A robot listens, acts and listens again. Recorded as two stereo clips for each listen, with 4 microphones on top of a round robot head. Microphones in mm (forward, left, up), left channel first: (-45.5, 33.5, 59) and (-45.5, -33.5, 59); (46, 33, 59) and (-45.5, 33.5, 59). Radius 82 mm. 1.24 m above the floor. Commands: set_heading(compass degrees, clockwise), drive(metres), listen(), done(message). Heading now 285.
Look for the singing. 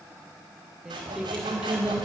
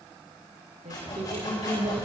set_heading(95)
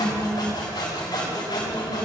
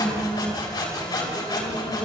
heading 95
set_heading(150)
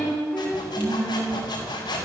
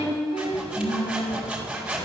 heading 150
done("Facing the singing.")